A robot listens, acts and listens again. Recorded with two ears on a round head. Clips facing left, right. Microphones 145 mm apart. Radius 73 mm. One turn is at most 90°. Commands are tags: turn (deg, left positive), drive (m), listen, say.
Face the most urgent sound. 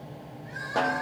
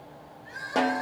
<turn deg="-30"/>
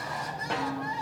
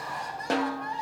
<say>Facing the crying, 2 to 4 m away.</say>